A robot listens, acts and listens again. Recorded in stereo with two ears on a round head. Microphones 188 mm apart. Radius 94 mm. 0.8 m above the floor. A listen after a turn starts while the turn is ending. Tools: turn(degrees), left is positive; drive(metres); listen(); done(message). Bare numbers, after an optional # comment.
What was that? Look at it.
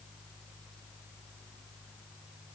listen()
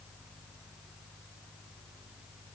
listen()
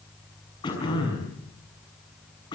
# The throat clearing: about 20° left or 160° left.
turn(20)
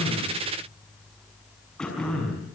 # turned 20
done("Found it: throat clearing, straight ahead, over 4 m away.")